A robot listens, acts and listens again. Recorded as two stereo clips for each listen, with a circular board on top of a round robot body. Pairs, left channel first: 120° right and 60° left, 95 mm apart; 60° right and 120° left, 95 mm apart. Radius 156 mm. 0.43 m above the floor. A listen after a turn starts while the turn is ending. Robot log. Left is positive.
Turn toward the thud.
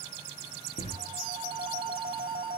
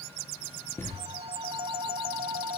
note: The thud: 130° right.
cmd yaw -130
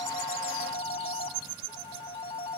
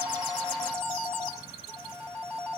end: Facing where the thud came from. I can't hear it now.